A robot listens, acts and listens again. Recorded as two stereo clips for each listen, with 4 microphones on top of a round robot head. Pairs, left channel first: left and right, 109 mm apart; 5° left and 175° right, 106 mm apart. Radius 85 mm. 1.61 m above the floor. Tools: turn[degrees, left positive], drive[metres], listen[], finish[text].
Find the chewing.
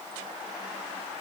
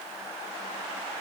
Action: listen[]
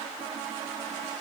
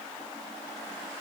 Action: listen[]
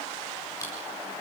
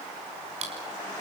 Thought: The chewing: 160° left.
Action: turn[160]
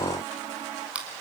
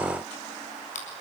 Thought: The chewing is now 10° right.
Action: turn[-10]
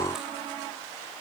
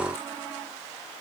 Action: listen[]
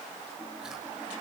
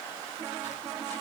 Action: listen[]
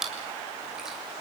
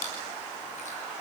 Action: finish[Found it: chewing, straight ahead.]